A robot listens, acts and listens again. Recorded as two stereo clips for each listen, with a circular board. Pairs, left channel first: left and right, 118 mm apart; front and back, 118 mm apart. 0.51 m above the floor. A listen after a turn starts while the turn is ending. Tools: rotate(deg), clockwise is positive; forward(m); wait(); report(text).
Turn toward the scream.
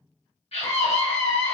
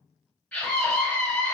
rotate(-75)
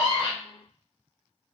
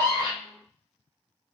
wait()
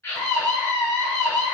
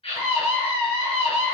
rotate(-25)
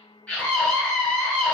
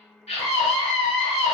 rotate(-10)
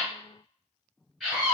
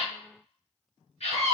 report("Found it: a scream, straight ahead.")